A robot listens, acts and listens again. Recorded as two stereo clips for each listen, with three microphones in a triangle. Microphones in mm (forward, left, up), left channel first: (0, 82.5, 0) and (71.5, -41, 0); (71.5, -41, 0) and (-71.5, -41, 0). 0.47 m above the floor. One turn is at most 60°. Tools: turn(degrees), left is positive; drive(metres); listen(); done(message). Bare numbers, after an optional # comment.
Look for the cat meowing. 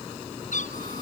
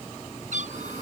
# The cat meowing: 150° left.
turn(60)
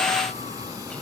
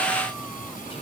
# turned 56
# Nothing new. It was at 90° left.
turn(60)
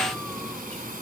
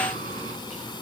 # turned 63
# Nothing new. It was at 30° left.
turn(30)
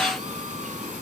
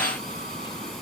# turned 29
done("I heard a cat meowing from this way, but can't make it out now.")